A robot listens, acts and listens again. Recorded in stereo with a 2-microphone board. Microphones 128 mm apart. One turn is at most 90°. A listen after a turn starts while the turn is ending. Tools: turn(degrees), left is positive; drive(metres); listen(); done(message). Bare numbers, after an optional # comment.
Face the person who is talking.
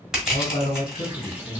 # The man speaking: about 70° left or 110° left.
turn(70)
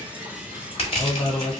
# So it is at 20° left.
turn(20)
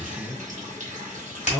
done("Facing the man speaking, 1 to 2 m away.")